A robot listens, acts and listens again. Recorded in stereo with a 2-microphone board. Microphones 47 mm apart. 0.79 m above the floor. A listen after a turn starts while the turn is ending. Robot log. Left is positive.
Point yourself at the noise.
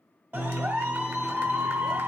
note: The clap: about 50° right or 130° right.
cmd yaw -50
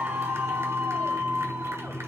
note: So it is at 80° right.
cmd yaw -80
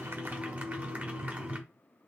note: The clap is now 30° right.
cmd yaw -30
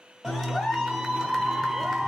end: Found it: a clap, straight ahead, 1 to 2 m away.